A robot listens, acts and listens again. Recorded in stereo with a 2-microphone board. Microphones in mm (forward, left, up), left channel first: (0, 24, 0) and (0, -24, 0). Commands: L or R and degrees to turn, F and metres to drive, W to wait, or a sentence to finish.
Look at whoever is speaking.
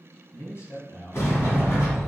L60
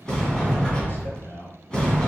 L50
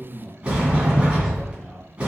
Found it: a man speaking, straight ahead.